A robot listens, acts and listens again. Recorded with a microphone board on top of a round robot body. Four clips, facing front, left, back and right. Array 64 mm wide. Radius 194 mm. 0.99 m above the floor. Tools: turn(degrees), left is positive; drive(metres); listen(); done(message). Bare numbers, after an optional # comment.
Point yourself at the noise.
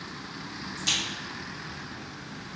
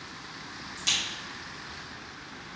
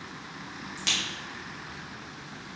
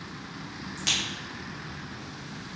# The crack: 130° right.
turn(-130)
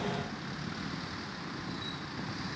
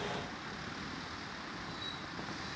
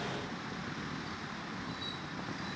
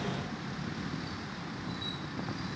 done("I heard a crack from this way, but can't make it out now.")